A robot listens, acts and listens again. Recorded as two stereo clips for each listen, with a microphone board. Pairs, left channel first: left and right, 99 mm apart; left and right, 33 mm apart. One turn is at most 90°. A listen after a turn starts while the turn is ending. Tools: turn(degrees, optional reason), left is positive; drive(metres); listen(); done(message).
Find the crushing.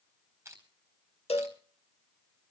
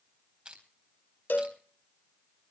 turn(degrees=-25, reason="The crushing: about 25° right or 155° right.")
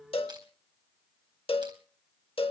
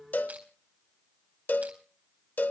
listen()
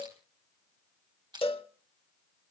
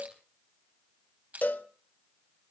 turn(degrees=-90, reason="So it is at 130° right.")
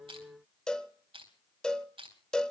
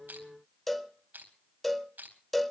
turn(degrees=-70, reason="The crushing is now 70° right.")
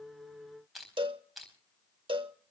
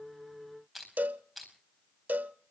done("Facing the crushing, over 4 m away.")